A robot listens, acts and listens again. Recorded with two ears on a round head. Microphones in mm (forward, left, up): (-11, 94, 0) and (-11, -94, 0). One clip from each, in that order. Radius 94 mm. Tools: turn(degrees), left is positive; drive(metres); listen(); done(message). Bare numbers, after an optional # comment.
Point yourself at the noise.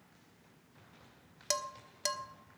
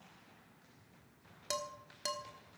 # The dishes clattering: about 25° left or 155° left.
turn(25)
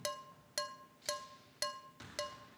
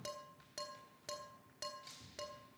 # So it is at 130° left.
turn(130)
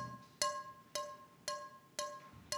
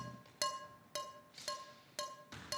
done("Facing the dishes clattering, 1 to 2 m away.")